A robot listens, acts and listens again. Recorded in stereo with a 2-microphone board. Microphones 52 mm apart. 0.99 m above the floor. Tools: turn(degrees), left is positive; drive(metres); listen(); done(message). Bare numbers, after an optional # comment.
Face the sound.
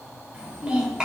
# The child speaking: about 15° right or 165° right.
turn(-15)
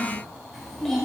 turn(30)
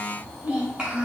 # So it is at 20° right.
turn(-20)
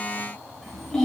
done("Found it: a child speaking, straight ahead.")